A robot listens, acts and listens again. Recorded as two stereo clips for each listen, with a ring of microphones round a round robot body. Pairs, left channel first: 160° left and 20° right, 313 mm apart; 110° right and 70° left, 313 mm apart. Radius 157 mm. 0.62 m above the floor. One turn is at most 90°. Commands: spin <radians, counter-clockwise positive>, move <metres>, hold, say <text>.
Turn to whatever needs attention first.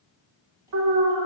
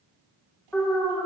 spin -0.52
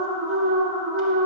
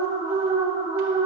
say Facing the alarm, 2 to 4 m away.